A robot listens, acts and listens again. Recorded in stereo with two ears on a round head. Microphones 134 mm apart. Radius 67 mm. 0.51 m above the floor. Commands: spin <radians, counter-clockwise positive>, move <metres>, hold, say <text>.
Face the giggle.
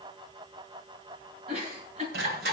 spin -0.87
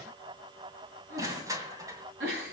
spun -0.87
spin -1.40
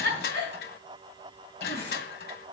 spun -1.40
spin 0.26
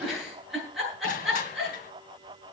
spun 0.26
say Found it: a giggle, straight ahead, over 4 m away.